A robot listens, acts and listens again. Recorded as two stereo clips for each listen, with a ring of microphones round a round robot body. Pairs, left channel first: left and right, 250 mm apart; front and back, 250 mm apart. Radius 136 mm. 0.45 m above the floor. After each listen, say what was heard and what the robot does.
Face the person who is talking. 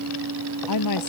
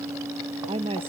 The woman speaking: 110° left. Turn 110° left.
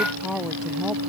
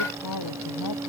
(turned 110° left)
Found it: a woman speaking, straight ahead.